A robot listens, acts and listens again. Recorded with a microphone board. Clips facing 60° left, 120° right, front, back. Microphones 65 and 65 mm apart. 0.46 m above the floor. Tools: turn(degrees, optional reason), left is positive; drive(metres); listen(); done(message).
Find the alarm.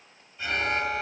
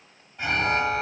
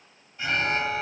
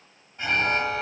turn(degrees=-135, reason="The alarm: 135° right.")
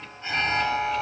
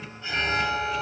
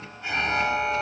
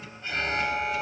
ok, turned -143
done("Facing the alarm.")